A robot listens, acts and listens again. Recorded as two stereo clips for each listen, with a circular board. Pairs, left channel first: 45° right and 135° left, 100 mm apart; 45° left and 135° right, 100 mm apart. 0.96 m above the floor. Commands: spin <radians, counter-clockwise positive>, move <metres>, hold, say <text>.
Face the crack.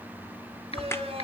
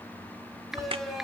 spin -1.92
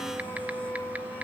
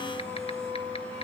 say Facing where the crack came from. I can't hear it now.